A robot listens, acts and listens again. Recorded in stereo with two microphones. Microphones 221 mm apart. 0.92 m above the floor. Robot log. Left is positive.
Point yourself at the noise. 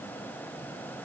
cmd idle
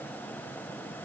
cmd idle
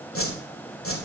note: The whoosh: about 65° left or 115° left.
cmd yaw +65
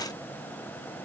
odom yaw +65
cmd idle
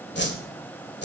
note: So it is at 50° left.
cmd yaw +50
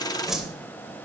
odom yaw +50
end: Found it: a whoosh, straight ahead, 1 to 2 m away.